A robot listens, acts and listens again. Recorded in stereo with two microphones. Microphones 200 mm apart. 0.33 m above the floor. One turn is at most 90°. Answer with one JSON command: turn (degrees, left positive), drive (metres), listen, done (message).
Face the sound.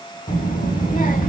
{"turn": 40}
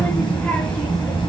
{"done": "Facing the child speaking."}